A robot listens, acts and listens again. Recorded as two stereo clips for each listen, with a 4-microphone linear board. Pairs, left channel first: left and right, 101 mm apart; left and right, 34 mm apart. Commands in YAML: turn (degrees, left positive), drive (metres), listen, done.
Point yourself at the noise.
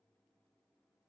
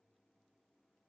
listen: true
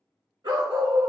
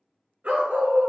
turn: -55
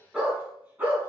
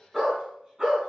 turn: -20
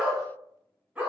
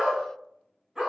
turn: -15
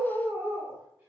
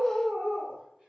turn: -10
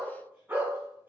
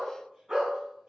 turn: -20
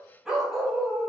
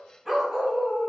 done: "Found it: a dog barking, straight ahead, 1 to 2 m away."